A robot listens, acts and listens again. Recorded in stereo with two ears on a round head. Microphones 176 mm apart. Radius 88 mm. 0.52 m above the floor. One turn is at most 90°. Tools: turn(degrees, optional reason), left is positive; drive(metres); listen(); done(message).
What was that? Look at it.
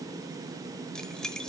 turn(degrees=30)
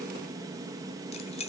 turn(degrees=90, reason="So it is at 145° left.")
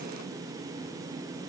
turn(degrees=55, reason="Nothing new. It was at 55° left.")
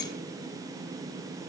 listen()
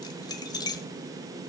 turn(degrees=20, reason="The keys jangling is now 20° left.")
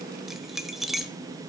done("Facing the keys jangling, 1 to 2 m away.")